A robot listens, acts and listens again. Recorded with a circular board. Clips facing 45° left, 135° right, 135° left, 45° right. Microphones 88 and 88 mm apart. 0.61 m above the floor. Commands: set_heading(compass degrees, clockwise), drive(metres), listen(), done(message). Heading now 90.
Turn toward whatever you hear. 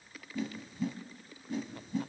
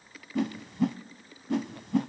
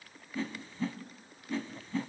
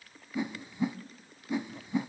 set_heading(210)
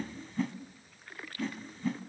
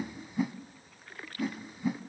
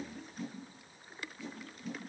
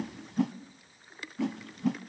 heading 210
set_heading(265)
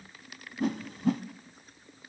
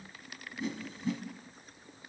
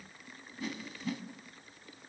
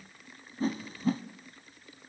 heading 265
set_heading(255)
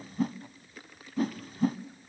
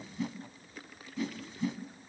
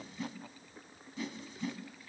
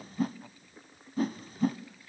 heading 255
done("Facing the whoosh.")